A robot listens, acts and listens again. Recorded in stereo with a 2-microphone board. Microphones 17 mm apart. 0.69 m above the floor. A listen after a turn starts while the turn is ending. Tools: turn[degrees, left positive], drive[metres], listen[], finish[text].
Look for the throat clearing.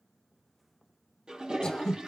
Thought: The throat clearing: about 60° left or 120° left.
Action: turn[60]
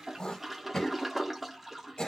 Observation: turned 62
Thought: So it is at 55° left.
Action: turn[55]
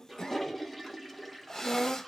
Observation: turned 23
Thought: The throat clearing is now 30° left.
Action: turn[30]
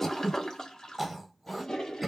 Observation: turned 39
Thought: The throat clearing is now 10° right.
Action: turn[-10]
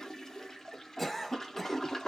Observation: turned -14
Action: finish[Found it: throat clearing, straight ahead.]